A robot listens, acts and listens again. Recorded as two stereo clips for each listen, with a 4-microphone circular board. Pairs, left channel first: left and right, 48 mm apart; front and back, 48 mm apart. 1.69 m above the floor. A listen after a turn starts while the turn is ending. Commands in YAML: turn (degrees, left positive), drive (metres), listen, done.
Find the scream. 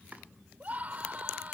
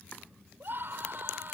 turn: -145
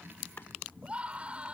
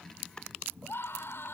turn: -25
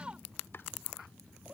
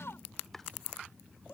turn: -20
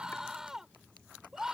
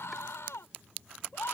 turn: -10
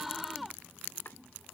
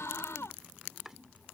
done: "Found it: a scream, straight ahead."